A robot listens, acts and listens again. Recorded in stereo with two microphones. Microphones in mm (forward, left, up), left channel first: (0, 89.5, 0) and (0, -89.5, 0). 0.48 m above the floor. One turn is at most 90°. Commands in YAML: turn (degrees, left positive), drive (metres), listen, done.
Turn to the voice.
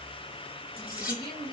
turn: 25
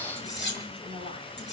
turn: 90
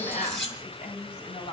turn: 40
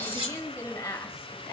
turn: 15
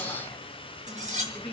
done: "Facing the woman speaking, 2 to 4 m away."